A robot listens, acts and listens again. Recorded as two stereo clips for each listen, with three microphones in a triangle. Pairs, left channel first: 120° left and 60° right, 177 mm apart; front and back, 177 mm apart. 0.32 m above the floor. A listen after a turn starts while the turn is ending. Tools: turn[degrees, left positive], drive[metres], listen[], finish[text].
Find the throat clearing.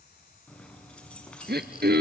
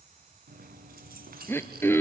Thought: The throat clearing: 75° right.
Action: turn[-75]
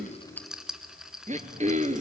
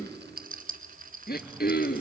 Thought: The throat clearing is now 20° right.
Action: turn[-20]
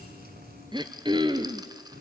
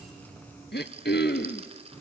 Action: finish[Found it: throat clearing, straight ahead, under 1 m away.]